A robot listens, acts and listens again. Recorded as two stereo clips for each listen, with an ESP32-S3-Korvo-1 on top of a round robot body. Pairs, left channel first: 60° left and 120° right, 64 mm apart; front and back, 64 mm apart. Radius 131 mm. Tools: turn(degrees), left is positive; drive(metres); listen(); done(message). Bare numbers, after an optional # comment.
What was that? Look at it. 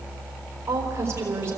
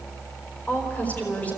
# The woman speaking: 70° right.
turn(-70)
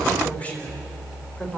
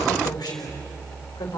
# The woman speaking is now 10° right.
turn(-10)
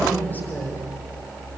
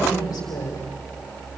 done("Facing the woman speaking.")